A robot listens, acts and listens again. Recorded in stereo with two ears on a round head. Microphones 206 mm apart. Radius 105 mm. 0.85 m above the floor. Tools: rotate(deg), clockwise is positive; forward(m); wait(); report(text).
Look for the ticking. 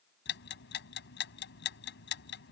rotate(-55)
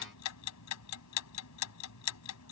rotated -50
rotate(-75)
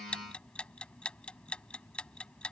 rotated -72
report("Found it: ticking, straight ahead.")